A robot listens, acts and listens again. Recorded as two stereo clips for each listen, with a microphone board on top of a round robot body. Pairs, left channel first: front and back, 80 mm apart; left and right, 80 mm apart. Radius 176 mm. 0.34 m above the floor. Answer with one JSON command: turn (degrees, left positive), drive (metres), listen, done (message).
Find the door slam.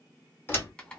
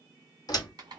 {"turn": 60}
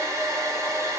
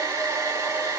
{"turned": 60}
{"done": "I heard a door slam from this way, but can't make it out now."}